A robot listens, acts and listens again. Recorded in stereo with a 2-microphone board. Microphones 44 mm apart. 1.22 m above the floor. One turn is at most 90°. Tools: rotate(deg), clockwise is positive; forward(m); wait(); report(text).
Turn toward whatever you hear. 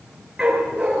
rotate(30)
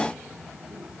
wait()
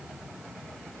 wait()
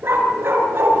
rotate(90)
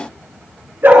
rotate(45)
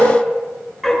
report("Found it: a dog barking, straight ahead, over 4 m away.")